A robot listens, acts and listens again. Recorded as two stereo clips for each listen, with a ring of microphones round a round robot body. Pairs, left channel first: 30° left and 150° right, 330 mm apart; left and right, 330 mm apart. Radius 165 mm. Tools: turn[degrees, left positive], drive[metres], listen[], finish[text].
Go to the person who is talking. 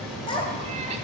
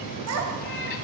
Thought: The child speaking: 45° right.
Action: turn[-45]
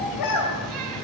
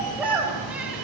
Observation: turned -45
Action: drive[1.0]
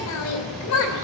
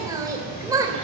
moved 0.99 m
Thought: The child speaking is now 10° right.
Action: turn[-10]
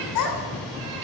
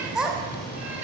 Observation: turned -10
Action: drive[1.0]
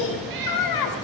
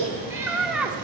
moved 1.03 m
Action: drive[1.0]
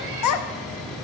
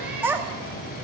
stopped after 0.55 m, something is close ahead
Action: finish[I am next to the child speaking.]